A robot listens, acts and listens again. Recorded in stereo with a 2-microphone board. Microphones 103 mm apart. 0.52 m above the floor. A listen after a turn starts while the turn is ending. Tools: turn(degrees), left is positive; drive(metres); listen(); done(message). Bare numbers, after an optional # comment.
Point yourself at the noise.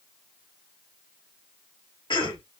# The cough: about 50° left or 130° left.
turn(50)
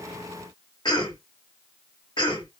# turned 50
# So it is at 65° left.
turn(65)
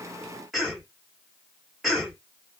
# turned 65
done("Found it: a cough, straight ahead.")